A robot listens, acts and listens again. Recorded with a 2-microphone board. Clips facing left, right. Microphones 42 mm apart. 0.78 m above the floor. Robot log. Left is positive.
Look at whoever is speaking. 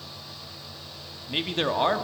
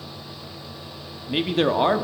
cmd yaw -30
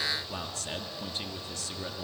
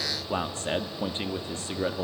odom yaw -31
note: So it is at 145° right.
cmd yaw -145
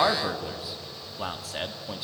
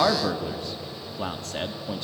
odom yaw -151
end: Facing the man speaking.